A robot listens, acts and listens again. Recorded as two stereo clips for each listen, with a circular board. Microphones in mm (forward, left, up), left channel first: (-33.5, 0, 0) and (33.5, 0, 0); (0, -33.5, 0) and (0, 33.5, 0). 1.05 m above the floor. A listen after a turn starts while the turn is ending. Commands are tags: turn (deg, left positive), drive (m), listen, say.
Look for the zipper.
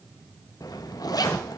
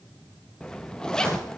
<turn deg="-170"/>
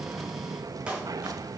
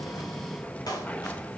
<turn deg="-20"/>
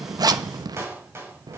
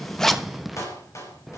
<say>Found it: a zipper, straight ahead.</say>